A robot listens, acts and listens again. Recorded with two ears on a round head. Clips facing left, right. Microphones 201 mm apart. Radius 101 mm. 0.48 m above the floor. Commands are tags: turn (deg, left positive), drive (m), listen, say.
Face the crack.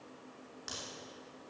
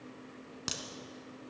<turn deg="-75"/>
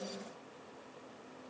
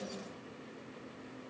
<listen/>
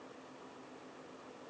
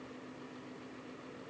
<say>I heard a crack, but can't make it out now. It was about straight ahead or 30° right.</say>